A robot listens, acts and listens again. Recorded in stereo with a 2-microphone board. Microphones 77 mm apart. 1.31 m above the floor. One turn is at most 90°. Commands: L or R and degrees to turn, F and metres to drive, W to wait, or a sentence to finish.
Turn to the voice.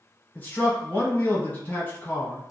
L25
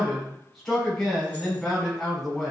Facing the man speaking.